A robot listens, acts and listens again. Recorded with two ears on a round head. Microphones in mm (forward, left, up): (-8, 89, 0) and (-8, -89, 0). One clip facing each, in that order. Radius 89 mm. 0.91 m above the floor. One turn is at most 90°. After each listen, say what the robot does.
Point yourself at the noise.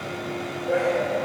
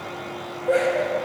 Turn 55° right.
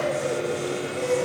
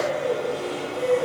Facing the laughter, over 4 m away.